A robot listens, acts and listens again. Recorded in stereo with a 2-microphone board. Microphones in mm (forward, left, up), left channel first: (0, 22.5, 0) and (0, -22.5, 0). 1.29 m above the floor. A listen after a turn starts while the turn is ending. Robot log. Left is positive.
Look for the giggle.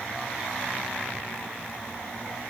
cmd idle
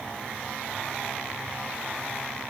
cmd idle
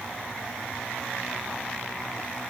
end: I can't make out a giggle to turn to.